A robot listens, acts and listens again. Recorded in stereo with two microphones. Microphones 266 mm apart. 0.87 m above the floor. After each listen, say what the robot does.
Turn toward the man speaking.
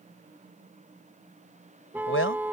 Turn 50° left.
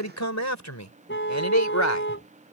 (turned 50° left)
Turn 80° left.
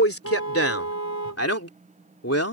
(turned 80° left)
Turn 60° left.
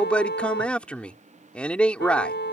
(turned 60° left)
Facing the man speaking.